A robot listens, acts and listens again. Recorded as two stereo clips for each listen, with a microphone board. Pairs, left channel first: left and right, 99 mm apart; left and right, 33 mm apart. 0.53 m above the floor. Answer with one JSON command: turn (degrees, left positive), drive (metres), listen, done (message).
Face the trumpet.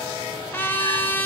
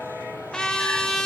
{"turn": 20}
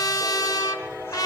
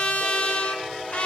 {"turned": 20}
{"turn": 140}
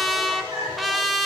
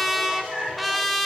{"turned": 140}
{"done": "Found it: a trumpet, straight ahead, 1 to 2 m away."}